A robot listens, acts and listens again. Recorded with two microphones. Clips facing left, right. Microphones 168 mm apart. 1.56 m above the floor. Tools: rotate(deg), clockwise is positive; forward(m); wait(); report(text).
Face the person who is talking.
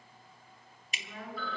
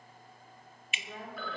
rotate(40)
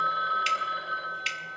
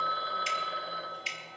wait()
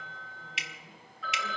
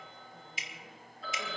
wait()
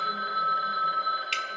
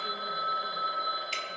report("I heard a woman speaking, but can't make it out now. It was about straight ahead or 100° right.")